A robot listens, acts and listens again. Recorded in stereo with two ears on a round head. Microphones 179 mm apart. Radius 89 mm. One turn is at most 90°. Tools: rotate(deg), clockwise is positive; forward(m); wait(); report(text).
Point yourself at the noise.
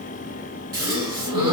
rotate(20)
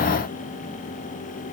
wait()
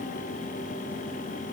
report("I heard a gasp, but can't make it out now. It was about straight ahead or 140° right.")